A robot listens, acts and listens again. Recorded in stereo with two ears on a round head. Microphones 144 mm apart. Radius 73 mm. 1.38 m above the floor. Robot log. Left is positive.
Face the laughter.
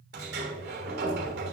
cmd idle
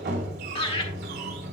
note: The laughter: about 30° left or 150° left.
cmd yaw +30
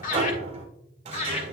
note: The laughter: about 45° left or 135° left.
cmd yaw +45
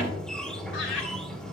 cmd idle
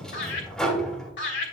note: So it is at 100° left.
cmd yaw +100
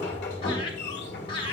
note: The laughter is now 30° left.
cmd yaw +30
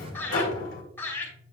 note: The laughter is now 10° left.
cmd yaw +10
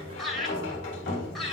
end: Facing the laughter.